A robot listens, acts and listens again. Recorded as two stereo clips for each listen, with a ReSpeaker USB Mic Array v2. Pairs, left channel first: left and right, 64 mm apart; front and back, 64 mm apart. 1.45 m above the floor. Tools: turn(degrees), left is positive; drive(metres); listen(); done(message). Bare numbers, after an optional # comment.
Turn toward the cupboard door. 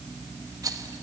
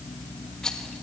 listen()
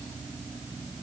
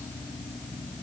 listen()
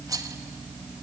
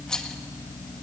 done("I can't make out a cupboard door to turn to.")